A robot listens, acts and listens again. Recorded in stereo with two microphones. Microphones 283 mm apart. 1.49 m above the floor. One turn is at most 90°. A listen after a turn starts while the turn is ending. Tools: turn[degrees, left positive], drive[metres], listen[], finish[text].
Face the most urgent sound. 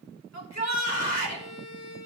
Thought: The shout: about 70° left or 110° left.
Action: turn[70]
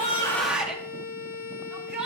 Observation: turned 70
Action: finish[Facing the shout.]